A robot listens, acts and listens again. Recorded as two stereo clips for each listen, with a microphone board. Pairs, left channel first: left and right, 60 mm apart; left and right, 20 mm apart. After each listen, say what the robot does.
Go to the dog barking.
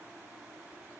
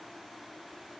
Keep listening.
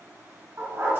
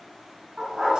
Turn 40° right.
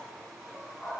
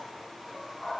Drive 1.0 m forward.
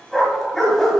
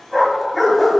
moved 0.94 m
Drive 1.0 m forward.
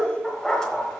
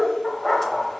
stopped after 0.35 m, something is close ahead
Turn 10° left.
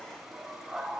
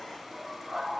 Arrived at the dog barking, straight ahead.